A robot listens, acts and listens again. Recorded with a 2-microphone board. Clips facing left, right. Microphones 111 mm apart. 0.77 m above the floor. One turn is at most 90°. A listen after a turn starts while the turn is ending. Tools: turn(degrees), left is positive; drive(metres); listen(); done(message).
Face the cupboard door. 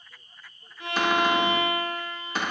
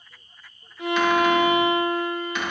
turn(degrees=40)
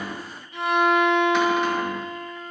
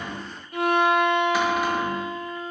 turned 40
listen()
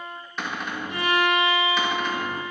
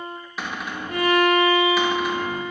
done("Found it: a cupboard door, straight ahead, under 1 m away.")